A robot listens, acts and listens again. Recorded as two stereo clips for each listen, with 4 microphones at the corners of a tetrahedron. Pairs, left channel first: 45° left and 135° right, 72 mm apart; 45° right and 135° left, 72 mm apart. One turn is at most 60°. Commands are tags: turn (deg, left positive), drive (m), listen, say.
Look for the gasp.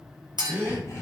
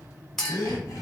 <turn deg="-60"/>
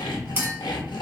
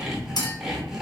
<turn deg="-10"/>
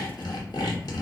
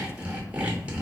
<say>Facing where the gasp came from. I can't hear it now.</say>